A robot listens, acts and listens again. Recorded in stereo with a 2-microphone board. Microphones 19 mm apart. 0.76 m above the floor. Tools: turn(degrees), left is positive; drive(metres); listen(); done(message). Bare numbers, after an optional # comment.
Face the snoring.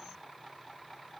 listen()
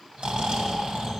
# The snoring: about 75° right or 105° right.
turn(-75)
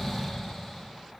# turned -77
done("Found it: snoring, straight ahead, 2 to 4 m away.")